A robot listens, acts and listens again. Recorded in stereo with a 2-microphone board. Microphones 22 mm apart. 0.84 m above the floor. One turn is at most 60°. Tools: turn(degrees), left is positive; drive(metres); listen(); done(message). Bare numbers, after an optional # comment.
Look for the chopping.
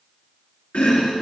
turn(60)
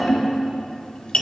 # So it is at 35° left.
turn(35)
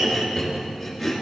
done("Facing the chopping, 2 to 4 m away.")